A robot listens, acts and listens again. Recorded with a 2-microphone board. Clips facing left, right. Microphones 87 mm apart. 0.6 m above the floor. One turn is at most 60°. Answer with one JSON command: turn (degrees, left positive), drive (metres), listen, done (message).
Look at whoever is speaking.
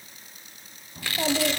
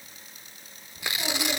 {"turn": 50}
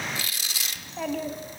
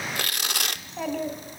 {"done": "Facing the child speaking."}